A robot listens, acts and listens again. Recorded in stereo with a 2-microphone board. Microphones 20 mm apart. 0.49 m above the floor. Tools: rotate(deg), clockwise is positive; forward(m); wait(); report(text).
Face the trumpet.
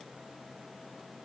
wait()
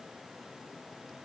wait()
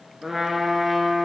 rotate(30)
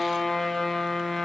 rotate(-15)
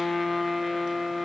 report("Facing the trumpet.")